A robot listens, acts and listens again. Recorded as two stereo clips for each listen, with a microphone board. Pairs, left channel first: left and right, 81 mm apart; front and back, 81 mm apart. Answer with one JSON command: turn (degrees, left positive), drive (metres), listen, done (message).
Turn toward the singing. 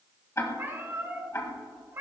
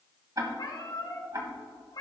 {"listen": true}
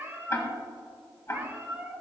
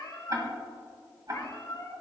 {"listen": true}
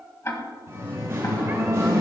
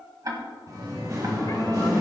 {"turn": -140}
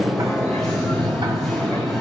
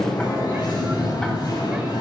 {"done": "Facing the singing, over 4 m away."}